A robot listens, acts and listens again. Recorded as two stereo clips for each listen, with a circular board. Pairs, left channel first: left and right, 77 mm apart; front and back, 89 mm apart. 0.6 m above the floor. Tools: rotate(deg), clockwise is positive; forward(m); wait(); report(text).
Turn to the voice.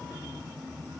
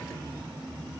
wait()
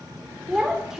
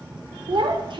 rotate(170)
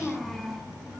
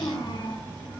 report("Facing the child speaking, 1 to 2 m away.")